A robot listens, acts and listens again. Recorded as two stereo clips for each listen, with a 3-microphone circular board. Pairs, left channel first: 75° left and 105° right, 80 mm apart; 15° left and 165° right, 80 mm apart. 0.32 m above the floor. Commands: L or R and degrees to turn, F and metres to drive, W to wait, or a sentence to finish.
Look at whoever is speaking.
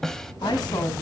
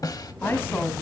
L80
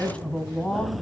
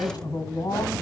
Facing the woman speaking, 1 to 2 m away.